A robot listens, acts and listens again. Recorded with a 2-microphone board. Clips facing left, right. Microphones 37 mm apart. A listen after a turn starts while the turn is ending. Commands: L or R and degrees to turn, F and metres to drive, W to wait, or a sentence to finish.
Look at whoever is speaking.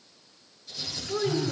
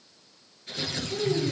L90
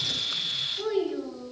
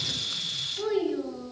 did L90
Facing the child speaking, over 4 m away.